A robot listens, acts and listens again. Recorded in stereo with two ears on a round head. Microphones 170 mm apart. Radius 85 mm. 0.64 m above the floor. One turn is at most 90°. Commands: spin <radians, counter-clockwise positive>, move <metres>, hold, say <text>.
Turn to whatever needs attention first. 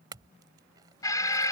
spin 0.35
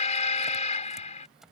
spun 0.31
spin 1.57
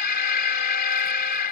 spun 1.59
spin 0.87
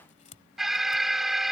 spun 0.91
say Facing the alarm.